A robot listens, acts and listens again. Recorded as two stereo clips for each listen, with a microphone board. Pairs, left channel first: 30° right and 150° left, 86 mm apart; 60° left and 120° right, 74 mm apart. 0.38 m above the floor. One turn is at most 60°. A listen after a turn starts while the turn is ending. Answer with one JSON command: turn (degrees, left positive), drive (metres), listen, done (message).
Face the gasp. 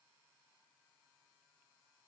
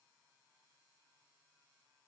{"listen": true}
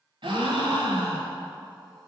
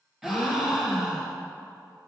{"turn": 60}
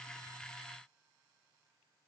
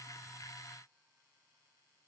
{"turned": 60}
{"turn": 60}
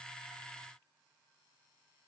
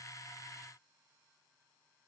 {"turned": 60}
{"turn": 40}
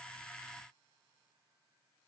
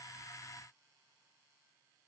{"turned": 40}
{"done": "I heard a gasp from this way, but can't make it out now."}